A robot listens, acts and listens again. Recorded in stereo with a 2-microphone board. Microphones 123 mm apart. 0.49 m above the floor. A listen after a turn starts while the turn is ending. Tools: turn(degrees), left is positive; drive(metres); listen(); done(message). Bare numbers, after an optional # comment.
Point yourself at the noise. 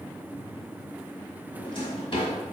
# The drawer: about 45° left or 135° left.
turn(45)
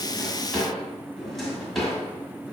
done("Facing the drawer, 1 to 2 m away.")